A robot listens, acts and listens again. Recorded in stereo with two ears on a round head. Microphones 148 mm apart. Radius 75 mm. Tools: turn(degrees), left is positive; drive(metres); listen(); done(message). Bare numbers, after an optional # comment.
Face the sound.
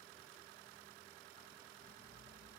listen()
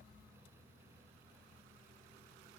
listen()
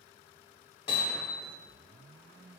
# The hammering: about 30° left or 150° left.
turn(30)
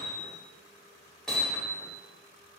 done("Facing the hammering.")